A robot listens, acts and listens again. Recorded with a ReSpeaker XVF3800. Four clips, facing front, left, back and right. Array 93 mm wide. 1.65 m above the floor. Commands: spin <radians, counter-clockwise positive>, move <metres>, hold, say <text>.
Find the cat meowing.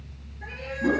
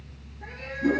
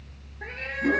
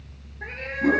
spin -2.27
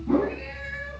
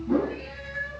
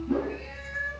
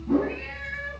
spin -0.96
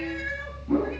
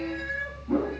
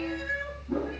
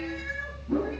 spin -0.26
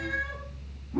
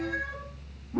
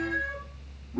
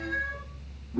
say Facing the cat meowing, over 4 m away.